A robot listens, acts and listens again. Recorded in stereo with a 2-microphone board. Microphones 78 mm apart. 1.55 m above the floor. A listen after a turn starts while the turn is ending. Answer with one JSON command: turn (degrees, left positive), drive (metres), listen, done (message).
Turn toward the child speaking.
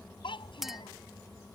{"turn": 90}
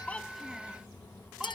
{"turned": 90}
{"listen": true}
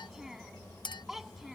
{"done": "Found it: a child speaking, straight ahead."}